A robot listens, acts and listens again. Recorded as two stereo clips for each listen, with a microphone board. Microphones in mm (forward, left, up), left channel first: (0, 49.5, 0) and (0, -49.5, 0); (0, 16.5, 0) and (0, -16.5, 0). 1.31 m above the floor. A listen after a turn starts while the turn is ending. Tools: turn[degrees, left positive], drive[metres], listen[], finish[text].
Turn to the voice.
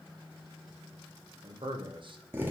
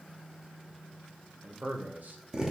Thought: The man speaking: about 55° right or 125° right.
Action: turn[-55]
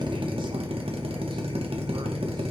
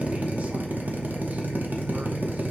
Action: listen[]
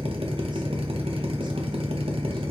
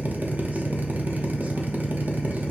Action: listen[]
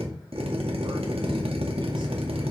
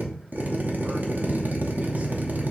Action: finish[I heard a man speaking, but can't make it out now. It was about straight ahead or 70° right.]